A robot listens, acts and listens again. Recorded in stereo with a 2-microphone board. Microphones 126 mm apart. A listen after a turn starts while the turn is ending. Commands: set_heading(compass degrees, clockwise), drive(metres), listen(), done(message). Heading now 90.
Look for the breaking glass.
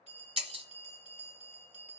set_heading(145)
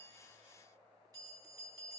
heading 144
listen()
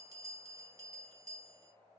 done("I heard breaking glass, but can't make it out now. It was about straight ahead or 70° right.")